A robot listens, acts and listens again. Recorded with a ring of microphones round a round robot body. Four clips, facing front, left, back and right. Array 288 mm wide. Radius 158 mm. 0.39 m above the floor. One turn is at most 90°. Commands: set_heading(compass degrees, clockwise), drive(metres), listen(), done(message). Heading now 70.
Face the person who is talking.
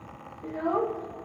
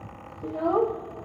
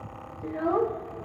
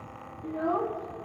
set_heading(340)
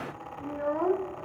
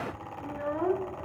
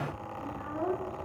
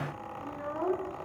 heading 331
set_heading(316)
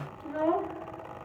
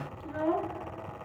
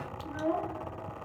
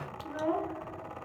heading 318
done("Facing the child speaking, under 1 m away.")